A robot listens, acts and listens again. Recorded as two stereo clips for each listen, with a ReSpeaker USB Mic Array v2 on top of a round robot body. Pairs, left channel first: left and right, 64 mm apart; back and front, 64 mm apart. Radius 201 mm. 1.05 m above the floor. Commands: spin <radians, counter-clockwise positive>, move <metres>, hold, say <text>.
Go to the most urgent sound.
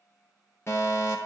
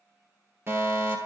spin 0.70
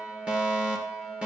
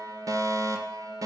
spin -0.35
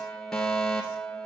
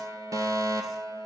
move 1.0
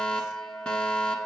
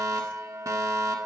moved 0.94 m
spin 0.26
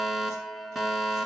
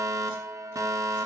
move 1.0
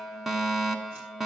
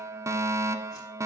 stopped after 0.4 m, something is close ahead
say I am next to the fire alarm.